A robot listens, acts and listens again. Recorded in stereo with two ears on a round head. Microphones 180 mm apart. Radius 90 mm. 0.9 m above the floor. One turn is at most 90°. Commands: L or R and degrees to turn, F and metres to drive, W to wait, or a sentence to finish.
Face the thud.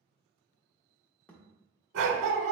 L30
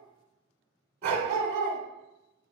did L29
W
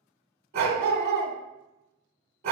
I heard a thud, but can't make it out now. It was about 20° right or 145° left.